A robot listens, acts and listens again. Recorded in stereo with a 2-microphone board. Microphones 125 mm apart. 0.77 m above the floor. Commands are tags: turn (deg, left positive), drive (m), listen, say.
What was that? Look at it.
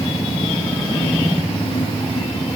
<listen/>
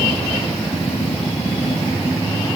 <listen/>
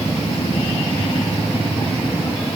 <say>I can't make out anything.</say>